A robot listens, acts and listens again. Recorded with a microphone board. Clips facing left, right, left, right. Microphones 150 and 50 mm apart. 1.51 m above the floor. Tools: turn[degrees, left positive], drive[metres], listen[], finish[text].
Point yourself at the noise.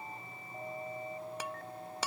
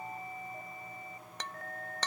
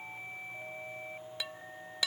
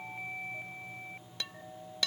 Action: turn[30]
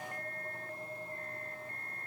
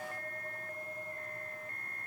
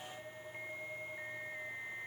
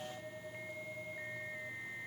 Action: listen[]
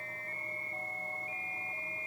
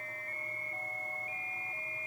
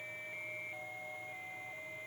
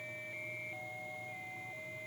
Action: finish[I heard breaking glass, but can't make it out now. It was about 20° right or 140° left.]